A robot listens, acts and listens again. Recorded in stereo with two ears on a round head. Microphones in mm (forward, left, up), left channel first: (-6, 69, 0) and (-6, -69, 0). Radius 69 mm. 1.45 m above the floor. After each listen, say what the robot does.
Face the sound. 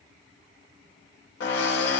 Turn 70° left.
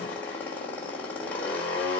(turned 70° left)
Turn 10° left.
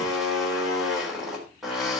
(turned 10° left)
Found it: a drill, straight ahead, over 4 m away.